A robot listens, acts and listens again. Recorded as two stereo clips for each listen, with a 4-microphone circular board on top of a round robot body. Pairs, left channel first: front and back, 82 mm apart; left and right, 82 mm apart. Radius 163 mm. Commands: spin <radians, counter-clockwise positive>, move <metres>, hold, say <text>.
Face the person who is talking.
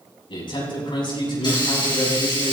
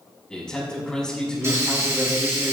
spin 0.17
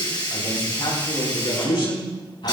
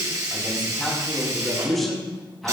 say Facing the man speaking.